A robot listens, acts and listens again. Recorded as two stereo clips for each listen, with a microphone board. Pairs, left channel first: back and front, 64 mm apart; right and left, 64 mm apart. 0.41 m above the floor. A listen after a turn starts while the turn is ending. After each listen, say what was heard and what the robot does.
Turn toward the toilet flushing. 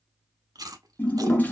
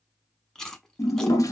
The toilet flushing: 120° right. Turn 120° right.
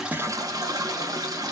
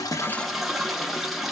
Facing the toilet flushing, under 1 m away.